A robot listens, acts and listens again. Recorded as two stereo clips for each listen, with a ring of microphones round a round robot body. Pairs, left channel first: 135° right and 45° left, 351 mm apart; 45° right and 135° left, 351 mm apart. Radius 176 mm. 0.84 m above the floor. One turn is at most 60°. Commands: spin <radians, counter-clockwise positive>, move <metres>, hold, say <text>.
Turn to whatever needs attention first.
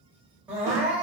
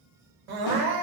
spin 1.05
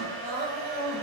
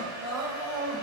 spin 1.05
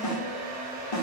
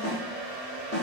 spin 0.35
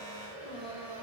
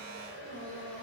spin 0.61
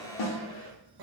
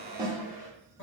spin 0.17
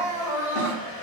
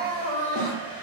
say Facing the crying, under 1 m away.